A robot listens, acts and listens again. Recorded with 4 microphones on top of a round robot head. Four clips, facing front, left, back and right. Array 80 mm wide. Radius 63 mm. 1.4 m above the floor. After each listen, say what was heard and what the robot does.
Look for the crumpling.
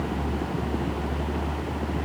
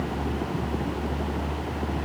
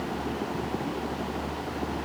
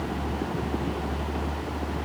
Keep listening.
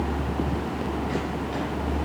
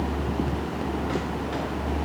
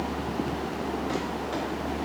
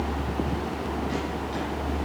Keep listening.
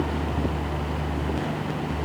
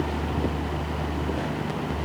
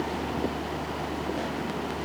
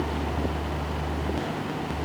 I can't make out crumpling.